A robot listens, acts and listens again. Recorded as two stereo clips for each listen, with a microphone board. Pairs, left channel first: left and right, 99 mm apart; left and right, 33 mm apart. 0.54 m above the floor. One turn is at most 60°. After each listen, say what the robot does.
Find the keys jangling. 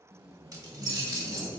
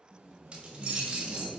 Turn 25° right.
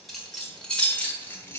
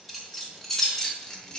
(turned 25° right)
Turn 25° left.
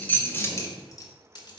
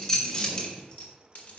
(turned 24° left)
Turn 30° left.
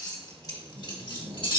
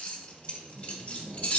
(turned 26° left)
Turn 55° left.
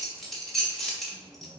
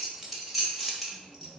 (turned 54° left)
Found it: keys jangling, straight ahead.